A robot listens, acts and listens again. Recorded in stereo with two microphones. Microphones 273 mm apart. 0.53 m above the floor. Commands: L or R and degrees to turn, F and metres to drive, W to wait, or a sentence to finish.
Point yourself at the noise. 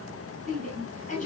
L30
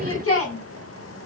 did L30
L115
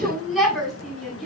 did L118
Facing the shout.